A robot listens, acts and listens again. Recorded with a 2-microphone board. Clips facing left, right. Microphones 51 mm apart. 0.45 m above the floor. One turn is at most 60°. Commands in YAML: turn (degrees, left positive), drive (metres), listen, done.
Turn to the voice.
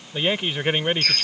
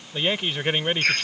turn: 30
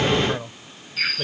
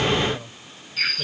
turn: 60
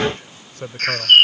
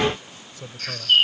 turn: 60
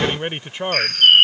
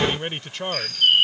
turn: 20
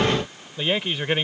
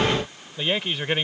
done: "Facing the man speaking."